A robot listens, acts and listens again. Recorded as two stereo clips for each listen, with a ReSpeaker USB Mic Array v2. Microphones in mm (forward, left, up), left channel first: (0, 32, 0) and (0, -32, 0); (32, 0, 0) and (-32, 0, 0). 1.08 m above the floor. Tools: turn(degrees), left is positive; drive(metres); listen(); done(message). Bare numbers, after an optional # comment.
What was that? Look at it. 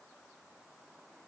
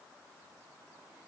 listen()
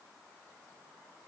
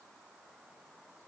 listen()
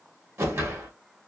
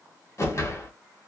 # The whoosh: 45° right.
turn(-45)
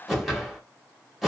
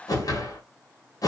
done("Found it: a whoosh, straight ahead.")